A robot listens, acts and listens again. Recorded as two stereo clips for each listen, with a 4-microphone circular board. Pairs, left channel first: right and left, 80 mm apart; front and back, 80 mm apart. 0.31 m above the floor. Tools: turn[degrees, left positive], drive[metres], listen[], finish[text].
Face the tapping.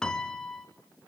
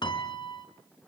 Action: listen[]
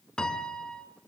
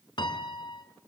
Action: listen[]
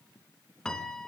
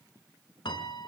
Action: finish[I can't make out tapping to turn to.]